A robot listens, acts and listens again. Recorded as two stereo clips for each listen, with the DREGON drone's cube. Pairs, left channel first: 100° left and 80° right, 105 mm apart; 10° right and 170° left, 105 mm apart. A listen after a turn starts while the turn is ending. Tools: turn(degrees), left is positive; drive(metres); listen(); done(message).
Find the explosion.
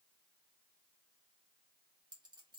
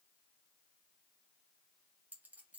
listen()
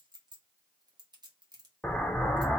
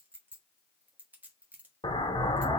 turn(degrees=20)
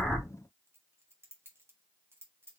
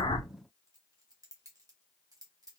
done("Facing where the explosion came from. I can't hear it now.")